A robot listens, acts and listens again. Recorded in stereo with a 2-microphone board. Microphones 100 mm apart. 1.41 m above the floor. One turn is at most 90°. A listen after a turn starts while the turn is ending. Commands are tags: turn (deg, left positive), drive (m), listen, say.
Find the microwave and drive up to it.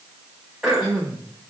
<listen/>
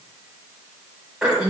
<listen/>
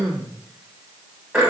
<say>I can't make out a microwave, only throat clearing.</say>